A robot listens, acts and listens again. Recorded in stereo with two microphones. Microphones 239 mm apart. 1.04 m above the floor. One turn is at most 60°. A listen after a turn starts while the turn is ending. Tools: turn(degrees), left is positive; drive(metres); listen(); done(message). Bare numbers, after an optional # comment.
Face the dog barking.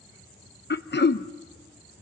listen()
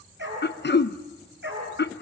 # The dog barking: about 50° right or 130° right.
turn(-50)
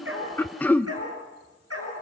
# So it is at 85° right.
turn(-60)
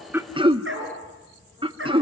# The dog barking is now 60° right.
turn(-60)
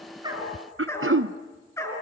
# The dog barking is now 10° left.
turn(10)
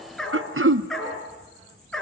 done("Facing the dog barking, over 4 m away.")